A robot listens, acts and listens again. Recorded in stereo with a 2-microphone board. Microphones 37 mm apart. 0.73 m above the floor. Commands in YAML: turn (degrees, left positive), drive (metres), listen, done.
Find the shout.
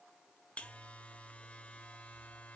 listen: true
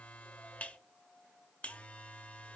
listen: true
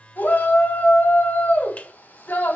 turn: 60
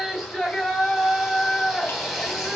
done: "Facing the shout."